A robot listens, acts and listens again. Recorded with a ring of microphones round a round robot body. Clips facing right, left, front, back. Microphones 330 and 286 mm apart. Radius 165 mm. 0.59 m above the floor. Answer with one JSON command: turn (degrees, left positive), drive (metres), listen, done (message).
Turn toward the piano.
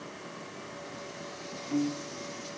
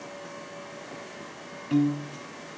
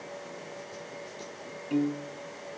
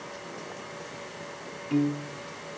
{"turn": 95}
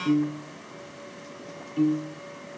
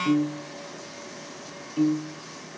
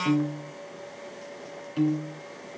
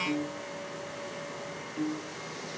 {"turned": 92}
{"done": "Facing the piano."}